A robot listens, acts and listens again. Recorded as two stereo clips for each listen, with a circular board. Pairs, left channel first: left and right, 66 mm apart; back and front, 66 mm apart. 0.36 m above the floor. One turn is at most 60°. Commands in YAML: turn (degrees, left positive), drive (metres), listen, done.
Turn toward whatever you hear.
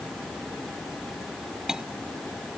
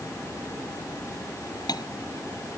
turn: -60
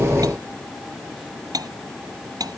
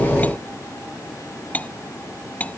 turn: -60
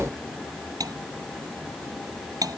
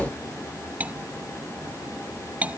turn: -60
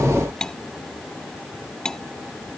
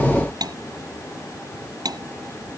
turn: 10
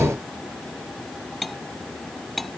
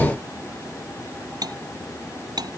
done: "Found it: cutlery clinking, straight ahead."